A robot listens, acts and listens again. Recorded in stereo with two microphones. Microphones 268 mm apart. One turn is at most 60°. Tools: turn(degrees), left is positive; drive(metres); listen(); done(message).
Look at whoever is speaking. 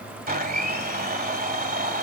listen()
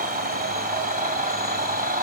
listen()
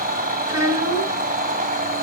turn(degrees=-60)
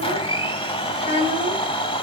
turn(degrees=-25)
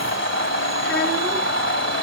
listen()
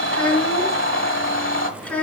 done("Facing the child speaking, 2 to 4 m away.")